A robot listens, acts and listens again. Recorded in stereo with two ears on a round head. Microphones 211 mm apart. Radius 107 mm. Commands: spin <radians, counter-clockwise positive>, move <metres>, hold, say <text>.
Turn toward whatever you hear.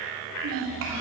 spin -1.05
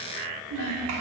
spin -1.05
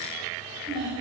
spin -0.35
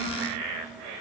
say Facing the child speaking.